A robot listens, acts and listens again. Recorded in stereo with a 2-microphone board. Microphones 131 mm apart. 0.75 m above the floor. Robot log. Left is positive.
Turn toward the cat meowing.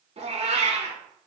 note: The cat meowing: about 55° right or 125° right.
cmd yaw -55
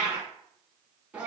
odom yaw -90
note: So it is at 10° right.
cmd yaw -10
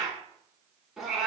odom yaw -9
end: Found it: a cat meowing, straight ahead, 1 to 2 m away.